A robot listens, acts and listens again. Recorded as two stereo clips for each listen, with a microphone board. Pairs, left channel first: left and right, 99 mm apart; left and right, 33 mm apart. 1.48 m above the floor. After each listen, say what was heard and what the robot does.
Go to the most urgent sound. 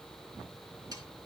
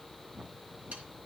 Keep listening.
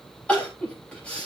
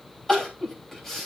Turn 30° left.
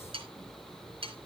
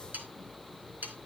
Keep listening.
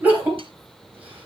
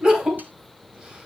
So it is at 20° right. Turn 20° right.
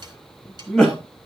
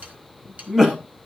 Drive 1.0 m forward.
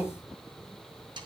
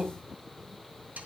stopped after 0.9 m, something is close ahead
The crying is now 15° left. Turn 15° left.
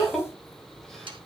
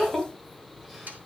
Something is in my way. I am facing the crying but have not reached it.